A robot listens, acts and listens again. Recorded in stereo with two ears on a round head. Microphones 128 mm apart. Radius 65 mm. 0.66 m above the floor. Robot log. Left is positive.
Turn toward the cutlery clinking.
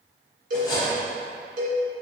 note: The cutlery clinking: about 30° left or 150° left.
cmd yaw +30
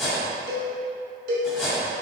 end: Found it: cutlery clinking, straight ahead, 2 to 4 m away.